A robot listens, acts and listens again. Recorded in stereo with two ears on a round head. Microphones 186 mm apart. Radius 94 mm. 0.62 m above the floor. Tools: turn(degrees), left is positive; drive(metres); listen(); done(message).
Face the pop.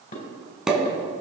turn(degrees=-30)
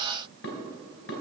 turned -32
listen()
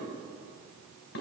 done("I heard a pop, but can't make it out now. It was about 30° left or 145° right.")